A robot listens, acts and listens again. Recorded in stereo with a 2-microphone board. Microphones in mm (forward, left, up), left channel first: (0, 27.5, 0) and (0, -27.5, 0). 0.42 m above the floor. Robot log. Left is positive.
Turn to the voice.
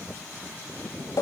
cmd idle
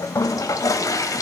cmd idle
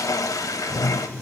end: I can't make out anyone speaking to turn to.